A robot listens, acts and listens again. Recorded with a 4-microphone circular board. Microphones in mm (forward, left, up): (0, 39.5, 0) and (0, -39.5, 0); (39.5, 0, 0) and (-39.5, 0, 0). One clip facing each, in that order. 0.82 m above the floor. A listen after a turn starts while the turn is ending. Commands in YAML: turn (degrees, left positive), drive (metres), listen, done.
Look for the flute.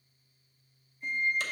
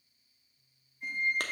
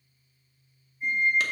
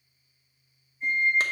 turn: -75
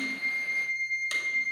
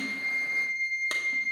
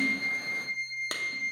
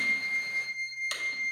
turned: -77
done: "Found it: a flute, straight ahead, 1 to 2 m away."